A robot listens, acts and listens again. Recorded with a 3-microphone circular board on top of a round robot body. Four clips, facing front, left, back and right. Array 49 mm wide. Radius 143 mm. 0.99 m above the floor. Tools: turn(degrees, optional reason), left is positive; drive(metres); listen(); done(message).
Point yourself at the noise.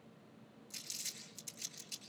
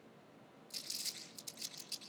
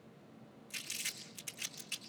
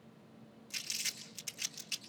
turn(degrees=-140, reason="The crumpling: 140° right.")
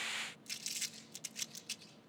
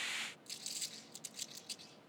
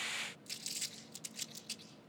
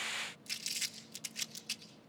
turn(degrees=-65, reason="The crumpling is now 65° right.")
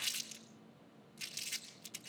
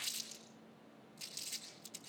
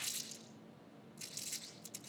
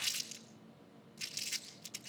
turn(degrees=-40, reason="The crumpling is now 40° right.")
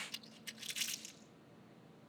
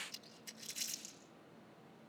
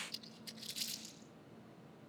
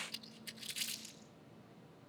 turn(degrees=-20, reason="The crumpling is now 20° right.")
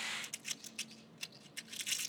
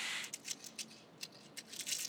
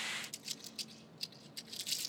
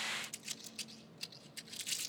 done("Facing the crumpling.")